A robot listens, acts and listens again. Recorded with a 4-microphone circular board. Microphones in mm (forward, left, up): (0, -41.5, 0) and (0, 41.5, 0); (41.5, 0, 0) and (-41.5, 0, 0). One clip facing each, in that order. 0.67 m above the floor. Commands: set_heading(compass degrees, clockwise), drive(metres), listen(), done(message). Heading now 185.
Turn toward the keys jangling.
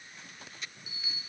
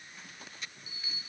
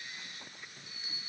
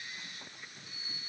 listen()
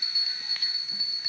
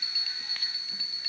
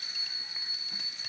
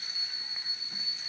listen()
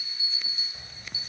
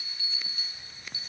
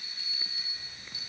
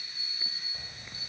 set_heading(325)
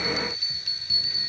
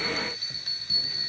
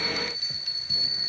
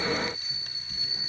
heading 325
listen()
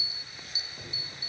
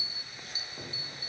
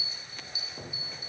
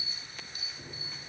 set_heading(310)
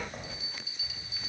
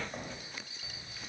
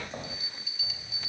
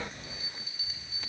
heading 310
done("Facing the keys jangling, 2 to 4 m away.")